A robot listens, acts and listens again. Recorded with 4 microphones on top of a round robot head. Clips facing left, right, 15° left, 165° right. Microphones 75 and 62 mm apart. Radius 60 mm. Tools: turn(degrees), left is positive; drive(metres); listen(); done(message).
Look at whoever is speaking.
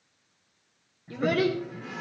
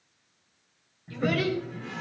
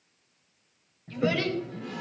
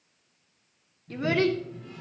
turn(degrees=145)
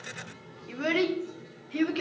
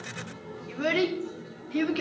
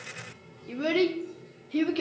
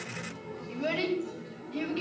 done("Found it: a child speaking, straight ahead, 2 to 4 m away.")